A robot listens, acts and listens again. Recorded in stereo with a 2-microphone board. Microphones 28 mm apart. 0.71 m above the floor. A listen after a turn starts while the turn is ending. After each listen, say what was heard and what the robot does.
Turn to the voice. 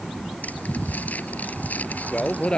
The man speaking: about 40° left or 140° left. Turn 40° left.
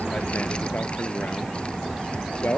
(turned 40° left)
So it is at 100° left. Turn 100° left.
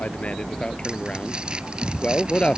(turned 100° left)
The man speaking is now 30° left. Turn 30° left.
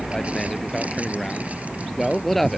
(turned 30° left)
Found it: a man speaking, straight ahead.